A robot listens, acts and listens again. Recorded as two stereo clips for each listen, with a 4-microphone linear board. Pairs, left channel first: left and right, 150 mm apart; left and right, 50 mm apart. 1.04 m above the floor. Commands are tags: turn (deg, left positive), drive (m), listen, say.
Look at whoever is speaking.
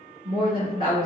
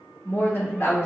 <turn deg="70"/>
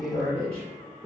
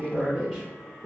<say>Found it: a woman speaking, straight ahead, 1 to 2 m away.</say>